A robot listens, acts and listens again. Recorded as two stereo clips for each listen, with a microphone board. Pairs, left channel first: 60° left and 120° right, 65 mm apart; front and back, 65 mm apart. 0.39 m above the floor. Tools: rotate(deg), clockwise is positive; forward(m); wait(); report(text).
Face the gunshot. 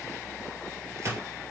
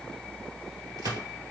rotate(165)
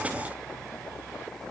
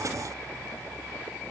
report("Facing where the gunshot came from. I can't hear it now.")